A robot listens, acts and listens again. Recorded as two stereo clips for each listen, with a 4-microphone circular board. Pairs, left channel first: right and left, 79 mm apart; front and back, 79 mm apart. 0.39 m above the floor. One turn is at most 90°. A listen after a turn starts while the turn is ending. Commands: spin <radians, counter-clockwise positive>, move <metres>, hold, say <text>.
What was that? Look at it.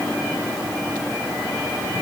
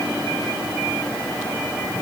hold
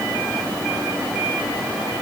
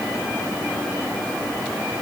hold
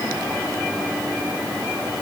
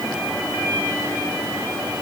say I can't make out anything.